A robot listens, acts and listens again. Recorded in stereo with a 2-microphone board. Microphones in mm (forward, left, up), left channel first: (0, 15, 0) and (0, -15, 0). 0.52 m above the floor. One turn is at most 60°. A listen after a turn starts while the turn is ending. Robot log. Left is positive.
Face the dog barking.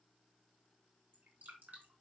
cmd idle
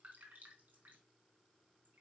cmd idle
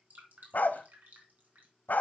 note: The dog barking: about 75° left or 105° left.
cmd yaw +60
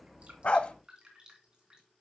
note: So it is at 45° left.
cmd yaw +45
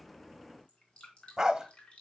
note: The dog barking is now 20° right.
cmd yaw -20
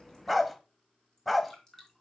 end: Found it: a dog barking, straight ahead.